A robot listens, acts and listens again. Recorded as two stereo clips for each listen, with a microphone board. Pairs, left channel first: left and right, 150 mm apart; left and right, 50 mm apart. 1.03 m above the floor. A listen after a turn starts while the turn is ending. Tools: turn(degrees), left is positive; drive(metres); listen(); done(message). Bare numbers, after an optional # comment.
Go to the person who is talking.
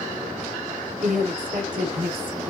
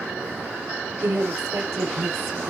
# The woman speaking: about 70° right or 110° right.
turn(-70)
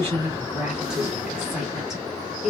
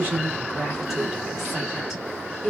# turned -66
drive(1.0)
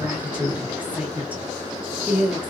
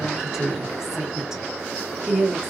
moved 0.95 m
# The woman speaking is now 10° right.
turn(-10)
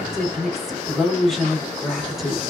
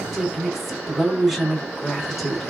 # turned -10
drive(1.0)
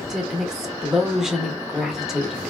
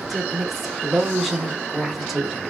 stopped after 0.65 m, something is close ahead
done("Arrived at the woman speaking, straight ahead.")